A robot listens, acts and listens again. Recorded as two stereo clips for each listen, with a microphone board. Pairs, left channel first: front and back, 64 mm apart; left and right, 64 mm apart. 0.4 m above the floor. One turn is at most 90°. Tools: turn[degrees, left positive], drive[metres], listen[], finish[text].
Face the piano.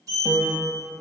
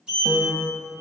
Thought: The piano: 160° left.
Action: turn[90]
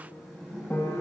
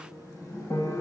Thought: The piano is now 60° left.
Action: turn[60]
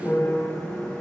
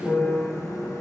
Thought: The piano is now 30° left.
Action: turn[30]
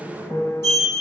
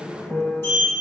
Thought: The piano is now 10° left.
Action: turn[10]
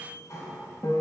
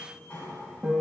Action: finish[Facing the piano, under 1 m away.]